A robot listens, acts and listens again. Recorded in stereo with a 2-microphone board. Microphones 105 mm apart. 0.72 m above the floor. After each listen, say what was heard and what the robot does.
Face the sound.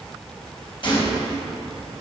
The gunshot: about 50° left or 130° left. Turn 50° left.
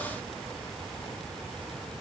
Keep listening.
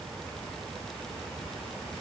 I heard a gunshot, but can't make it out now. It was about straight ahead or 80° left.